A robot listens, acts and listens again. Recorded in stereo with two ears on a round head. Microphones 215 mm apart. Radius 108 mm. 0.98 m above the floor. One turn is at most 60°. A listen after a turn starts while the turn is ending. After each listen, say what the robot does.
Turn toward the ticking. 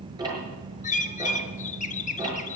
Turn 20° right.
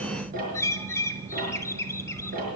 Turn 60° right.
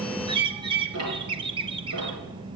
Turn 60° right.
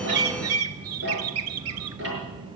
Turn 50° right.
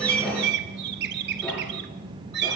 Keep listening.
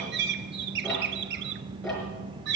Facing the ticking, over 4 m away.